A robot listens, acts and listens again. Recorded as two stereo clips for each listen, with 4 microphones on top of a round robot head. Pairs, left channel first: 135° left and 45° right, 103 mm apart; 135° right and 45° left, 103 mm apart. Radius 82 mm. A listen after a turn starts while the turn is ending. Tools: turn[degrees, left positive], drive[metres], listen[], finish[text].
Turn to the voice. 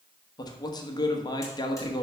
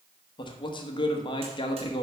Thought: The man speaking: 175° right.
Action: turn[-175]
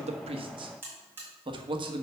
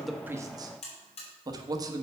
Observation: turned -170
Action: finish[Facing the man speaking, 1 to 2 m away.]